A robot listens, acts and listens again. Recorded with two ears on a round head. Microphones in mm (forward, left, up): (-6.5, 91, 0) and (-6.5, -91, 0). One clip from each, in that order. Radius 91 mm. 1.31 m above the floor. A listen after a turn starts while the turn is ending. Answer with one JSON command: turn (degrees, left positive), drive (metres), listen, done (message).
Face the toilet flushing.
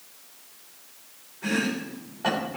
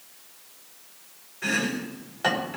{"listen": true}
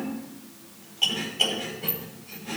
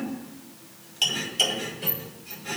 {"listen": true}
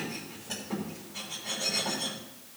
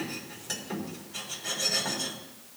{"done": "I can't make out a toilet flushing, only chopping."}